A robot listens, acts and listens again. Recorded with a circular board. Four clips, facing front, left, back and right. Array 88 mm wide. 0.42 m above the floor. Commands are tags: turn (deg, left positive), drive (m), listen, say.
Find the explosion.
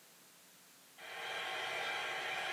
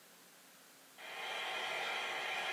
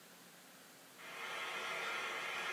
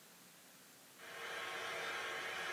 <listen/>
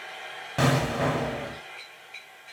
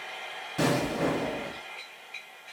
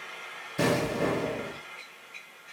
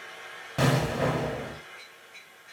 <turn deg="-20"/>
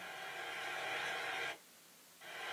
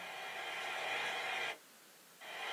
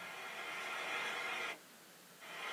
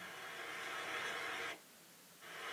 <say>Facing where the explosion came from. I can't hear it now.</say>